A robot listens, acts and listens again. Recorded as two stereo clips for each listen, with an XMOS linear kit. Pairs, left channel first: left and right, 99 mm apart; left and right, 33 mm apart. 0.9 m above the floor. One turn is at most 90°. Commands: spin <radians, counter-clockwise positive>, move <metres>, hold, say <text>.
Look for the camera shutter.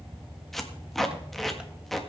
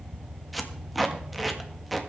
hold
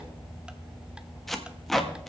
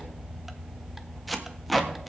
hold
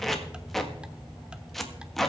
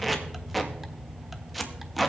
say I can't make out a camera shutter to turn to.